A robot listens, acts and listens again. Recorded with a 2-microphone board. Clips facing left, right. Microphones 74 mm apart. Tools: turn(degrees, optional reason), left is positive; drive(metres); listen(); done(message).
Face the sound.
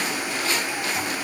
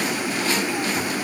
listen()
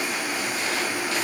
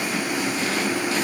listen()
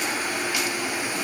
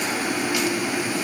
done("I can't make out anything.")